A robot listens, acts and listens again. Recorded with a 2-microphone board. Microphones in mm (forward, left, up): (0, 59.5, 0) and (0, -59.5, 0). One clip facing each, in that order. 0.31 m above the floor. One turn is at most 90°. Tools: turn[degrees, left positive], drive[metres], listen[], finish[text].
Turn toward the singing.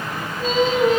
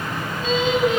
Thought: The singing: about 40° left or 140° left.
Action: turn[40]
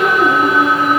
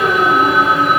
Thought: So it is at 110° left.
Action: turn[90]
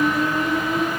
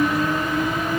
Thought: The singing is now 15° left.
Action: turn[15]
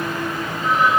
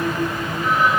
Action: listen[]
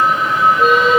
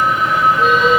Action: finish[Facing the singing, over 4 m away.]